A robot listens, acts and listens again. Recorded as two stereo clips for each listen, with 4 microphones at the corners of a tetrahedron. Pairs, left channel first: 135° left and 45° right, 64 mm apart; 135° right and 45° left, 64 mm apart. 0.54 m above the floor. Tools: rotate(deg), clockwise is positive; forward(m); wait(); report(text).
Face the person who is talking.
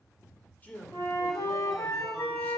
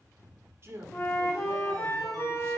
rotate(-75)
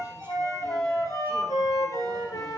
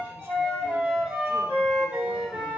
wait()
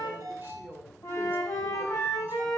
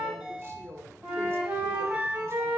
rotate(-10)
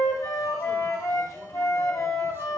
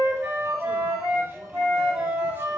wait()
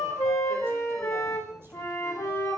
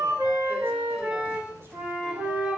wait()
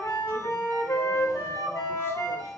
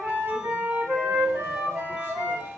report("Facing where the woman speaking came from. I can't hear it now.")